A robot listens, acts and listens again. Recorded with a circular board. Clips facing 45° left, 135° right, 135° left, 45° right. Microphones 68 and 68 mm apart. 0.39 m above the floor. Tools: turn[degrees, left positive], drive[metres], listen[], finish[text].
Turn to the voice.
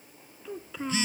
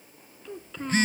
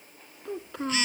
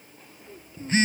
Thought: The child speaking: 130° left.
Action: turn[130]
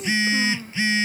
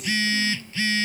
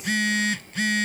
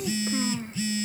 Action: listen[]
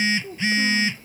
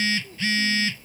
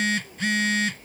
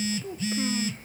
Thought: The child speaking is now 10° left.
Action: turn[10]
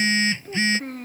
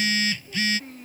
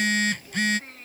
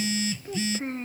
Thought: The child speaking is now 15° left.
Action: turn[15]
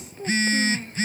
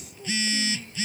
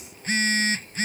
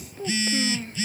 Action: finish[Facing the child speaking.]